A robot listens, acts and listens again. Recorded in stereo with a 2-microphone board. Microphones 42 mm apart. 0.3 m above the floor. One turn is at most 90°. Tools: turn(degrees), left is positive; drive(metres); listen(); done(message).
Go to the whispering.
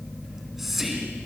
turn(degrees=-30)
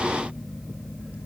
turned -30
listen()
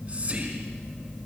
listen()
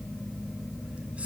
done("I heard whispering, but can't make it out now. It was about 25° left or 145° right. I did not reach it.")